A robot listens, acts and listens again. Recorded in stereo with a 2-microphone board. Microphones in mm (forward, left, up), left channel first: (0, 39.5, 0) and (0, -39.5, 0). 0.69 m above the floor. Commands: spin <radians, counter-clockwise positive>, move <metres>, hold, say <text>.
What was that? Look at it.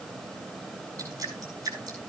spin -0.87
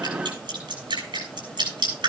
spin -1.40
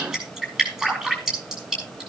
say Facing the dripping, over 4 m away.